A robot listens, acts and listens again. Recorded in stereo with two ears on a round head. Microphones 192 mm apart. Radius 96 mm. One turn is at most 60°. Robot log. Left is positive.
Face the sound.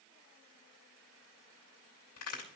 note: The crack: about 70° left or 110° left.
cmd yaw +60
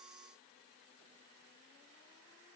cmd idle
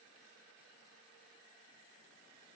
end: I heard a crack, but can't make it out now. It was about 10° left or 50° left.